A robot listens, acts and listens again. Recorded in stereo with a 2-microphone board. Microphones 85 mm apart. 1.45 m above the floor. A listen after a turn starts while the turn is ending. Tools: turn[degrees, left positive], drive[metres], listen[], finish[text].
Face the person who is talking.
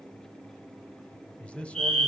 Action: turn[30]
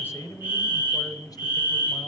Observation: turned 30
Thought: So it is at 135° left.
Action: turn[135]
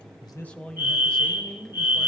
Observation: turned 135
Thought: The man speaking is now 10° left.
Action: turn[10]
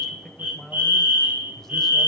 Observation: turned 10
Action: finish[Found it: a man speaking, straight ahead.]